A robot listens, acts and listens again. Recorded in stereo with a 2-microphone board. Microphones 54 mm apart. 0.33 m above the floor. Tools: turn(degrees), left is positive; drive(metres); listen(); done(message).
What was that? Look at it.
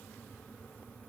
listen()
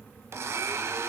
turn(degrees=-60)
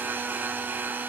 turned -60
turn(degrees=-45)
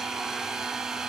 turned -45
turn(degrees=-10)
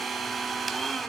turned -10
done("Found it: a blender, straight ahead, 1 to 2 m away.")